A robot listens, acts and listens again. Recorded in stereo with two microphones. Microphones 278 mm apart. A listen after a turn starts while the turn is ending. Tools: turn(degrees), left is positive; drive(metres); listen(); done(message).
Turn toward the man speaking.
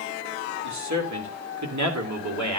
turn(degrees=-90)
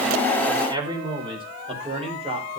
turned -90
turn(degrees=-20)
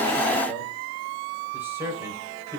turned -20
turn(degrees=-10)
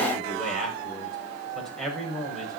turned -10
done("Found it: a man speaking, straight ahead, over 4 m away.")